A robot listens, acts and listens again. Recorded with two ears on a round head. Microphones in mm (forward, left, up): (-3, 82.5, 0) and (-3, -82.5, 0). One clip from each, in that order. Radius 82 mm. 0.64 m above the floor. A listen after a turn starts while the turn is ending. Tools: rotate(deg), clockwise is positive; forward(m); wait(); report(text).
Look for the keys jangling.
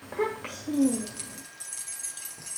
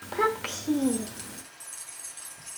rotate(-20)
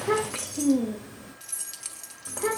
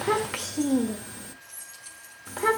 rotate(-115)
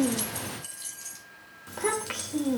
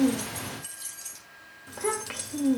report("Found it: keys jangling, straight ahead.")